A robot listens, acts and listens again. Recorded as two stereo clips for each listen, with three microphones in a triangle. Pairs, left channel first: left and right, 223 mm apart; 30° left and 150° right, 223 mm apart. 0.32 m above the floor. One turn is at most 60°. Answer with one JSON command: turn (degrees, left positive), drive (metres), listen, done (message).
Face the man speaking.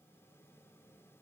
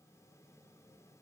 {"listen": true}
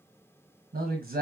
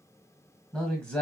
{"turn": -55}
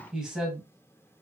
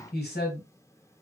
{"done": "Found it: a man speaking, straight ahead, 1 to 2 m away."}